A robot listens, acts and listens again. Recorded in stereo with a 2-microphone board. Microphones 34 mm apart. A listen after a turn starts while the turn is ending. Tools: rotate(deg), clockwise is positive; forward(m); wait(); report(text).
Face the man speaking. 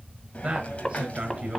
rotate(30)
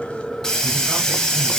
wait()
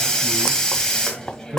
rotate(120)
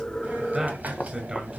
rotate(25)
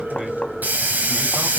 wait()
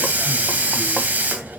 wait()
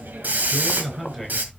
report("Facing the man speaking, over 4 m away.")